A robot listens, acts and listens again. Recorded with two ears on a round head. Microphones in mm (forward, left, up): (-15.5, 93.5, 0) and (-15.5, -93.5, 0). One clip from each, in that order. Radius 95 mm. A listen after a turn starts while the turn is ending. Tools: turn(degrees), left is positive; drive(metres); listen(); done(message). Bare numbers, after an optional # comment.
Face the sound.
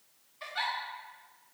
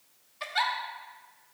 # The giggle: about 35° right or 145° right.
turn(-35)
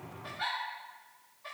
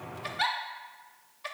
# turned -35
# So it is at 105° right.
turn(-105)
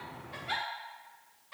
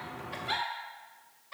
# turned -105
# The giggle is now 10° right.
turn(-10)
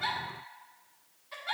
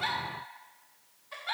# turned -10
done("Facing the giggle, under 1 m away.")